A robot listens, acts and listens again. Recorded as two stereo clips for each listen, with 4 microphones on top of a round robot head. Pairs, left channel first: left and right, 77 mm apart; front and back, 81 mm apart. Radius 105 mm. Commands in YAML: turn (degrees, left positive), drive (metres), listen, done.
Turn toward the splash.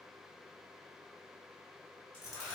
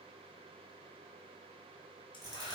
listen: true
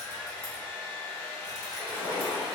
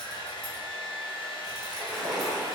turn: 90
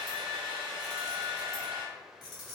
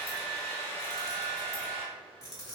done: "Facing where the splash came from. I can't hear it now."